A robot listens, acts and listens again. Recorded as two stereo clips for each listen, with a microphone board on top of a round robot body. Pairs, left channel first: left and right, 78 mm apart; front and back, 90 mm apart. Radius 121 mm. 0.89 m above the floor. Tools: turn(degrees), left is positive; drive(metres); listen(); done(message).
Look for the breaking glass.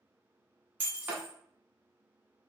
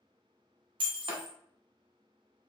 turn(degrees=-160)
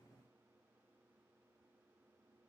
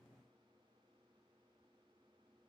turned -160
done("I heard breaking glass from this way, but can't make it out now.")